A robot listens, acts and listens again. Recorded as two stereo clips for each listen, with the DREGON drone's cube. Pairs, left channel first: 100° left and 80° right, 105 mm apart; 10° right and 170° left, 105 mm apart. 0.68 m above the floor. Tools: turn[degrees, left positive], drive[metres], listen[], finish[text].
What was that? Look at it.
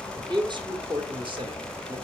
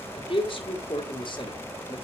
Thought: The man speaking: 45° right.
Action: turn[-45]
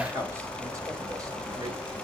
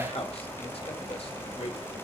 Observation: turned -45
Action: listen[]
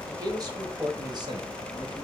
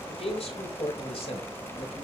Thought: The man speaking is now 35° right.
Action: turn[-35]
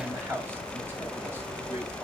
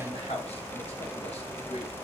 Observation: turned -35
Action: listen[]
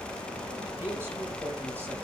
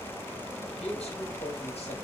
Action: listen[]
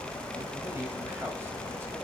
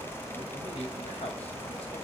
Action: finish[Facing where the man speaking came from. I can't hear it now.]